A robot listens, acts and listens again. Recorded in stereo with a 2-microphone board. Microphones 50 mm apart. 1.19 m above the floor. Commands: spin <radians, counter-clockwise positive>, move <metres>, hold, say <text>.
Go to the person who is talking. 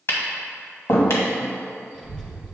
spin 0.26
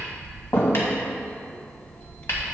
spin 2.53
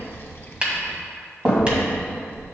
spin 0.79
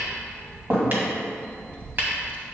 spin 0.44
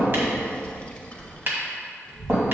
spin 0.35
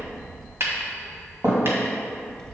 move 1.0
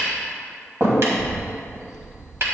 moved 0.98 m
spin 0.26
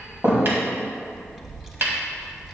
spin -0.17
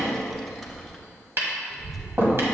move 1.0
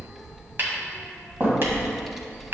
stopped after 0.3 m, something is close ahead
say Arrived at the child speaking, straight ahead.